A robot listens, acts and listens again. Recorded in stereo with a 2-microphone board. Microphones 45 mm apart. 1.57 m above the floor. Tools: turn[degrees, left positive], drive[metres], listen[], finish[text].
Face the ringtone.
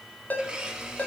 Thought: The ringtone: about 40° left or 140° left.
Action: turn[40]
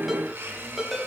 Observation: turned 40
Action: finish[Facing the ringtone, 2 to 4 m away.]